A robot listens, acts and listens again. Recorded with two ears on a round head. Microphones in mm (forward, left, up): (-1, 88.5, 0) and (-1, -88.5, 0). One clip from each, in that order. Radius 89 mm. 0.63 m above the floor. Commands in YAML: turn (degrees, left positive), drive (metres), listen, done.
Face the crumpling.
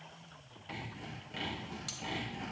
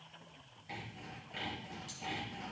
listen: true
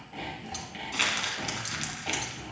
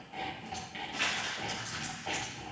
turn: 90
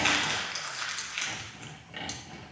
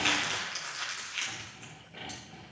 done: "Found it: crumpling, straight ahead."